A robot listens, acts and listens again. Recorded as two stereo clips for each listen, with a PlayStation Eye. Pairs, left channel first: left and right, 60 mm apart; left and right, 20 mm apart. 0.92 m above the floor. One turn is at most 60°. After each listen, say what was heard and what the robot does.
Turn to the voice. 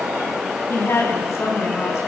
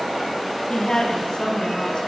The woman speaking: about 50° left or 130° left. Turn 50° left.
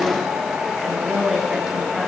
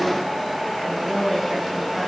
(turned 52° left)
Found it: a woman speaking, straight ahead, over 4 m away.